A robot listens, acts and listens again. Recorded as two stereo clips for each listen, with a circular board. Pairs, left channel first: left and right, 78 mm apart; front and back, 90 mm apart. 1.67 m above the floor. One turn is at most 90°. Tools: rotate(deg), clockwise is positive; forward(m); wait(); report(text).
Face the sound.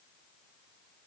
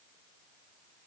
wait()
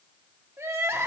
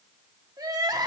rotate(90)
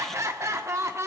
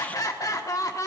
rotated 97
rotate(45)
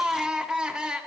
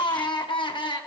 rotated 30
rotate(10)
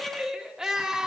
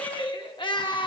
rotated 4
rotate(10)
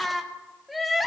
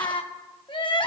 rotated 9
report("Found it: crying, straight ahead, 1 to 2 m away.")